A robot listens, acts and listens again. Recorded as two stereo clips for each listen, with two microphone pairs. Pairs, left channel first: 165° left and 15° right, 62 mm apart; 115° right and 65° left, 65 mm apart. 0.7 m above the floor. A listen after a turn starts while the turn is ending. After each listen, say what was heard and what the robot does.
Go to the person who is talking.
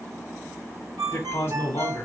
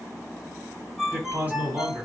The man speaking: 125° left. Turn 125° left.
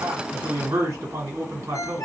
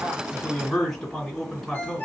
The man speaking is now 35° right. Turn 35° right.
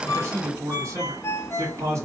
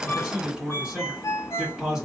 The man speaking is now 15° right. Turn 15° right.
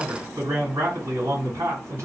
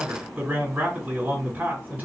Drive 1.0 m forward.
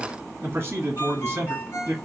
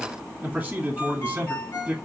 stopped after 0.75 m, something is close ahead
Arrived at the man speaking, straight ahead.